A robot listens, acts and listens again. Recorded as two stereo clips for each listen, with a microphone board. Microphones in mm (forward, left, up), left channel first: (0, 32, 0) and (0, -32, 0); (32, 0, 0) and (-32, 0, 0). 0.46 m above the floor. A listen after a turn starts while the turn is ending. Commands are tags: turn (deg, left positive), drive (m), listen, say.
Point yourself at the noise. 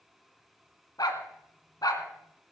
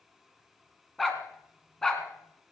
<turn deg="85"/>
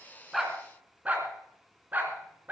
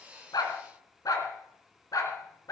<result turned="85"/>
<turn deg="-30"/>
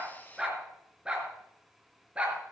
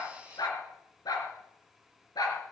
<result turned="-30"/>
<turn deg="-15"/>
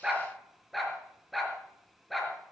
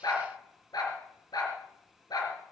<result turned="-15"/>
<say>Facing the dog barking.</say>